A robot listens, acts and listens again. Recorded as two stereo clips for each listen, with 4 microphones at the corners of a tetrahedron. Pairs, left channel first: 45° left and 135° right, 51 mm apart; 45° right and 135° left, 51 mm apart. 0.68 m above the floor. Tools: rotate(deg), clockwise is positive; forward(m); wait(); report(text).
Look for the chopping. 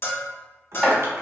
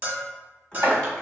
rotate(-140)
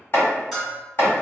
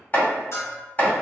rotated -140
rotate(-10)
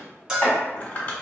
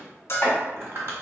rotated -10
wait()
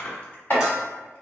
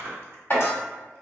report("Found it: chopping, straight ahead, 1 to 2 m away.")